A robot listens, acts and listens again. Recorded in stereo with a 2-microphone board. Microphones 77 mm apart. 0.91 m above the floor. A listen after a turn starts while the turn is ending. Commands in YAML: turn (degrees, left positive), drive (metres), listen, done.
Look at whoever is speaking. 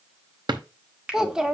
turn: -30
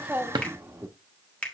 turn: -145
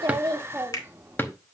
turn: -35
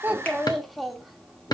done: "Facing the child speaking, 1 to 2 m away."